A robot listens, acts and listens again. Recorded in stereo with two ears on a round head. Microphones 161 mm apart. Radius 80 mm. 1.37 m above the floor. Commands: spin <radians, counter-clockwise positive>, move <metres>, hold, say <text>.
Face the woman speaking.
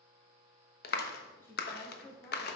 spin 0.35
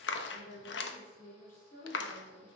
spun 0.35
spin 2.18
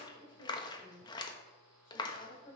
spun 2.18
spin 0.87
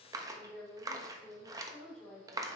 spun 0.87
say Found it: a woman speaking, straight ahead.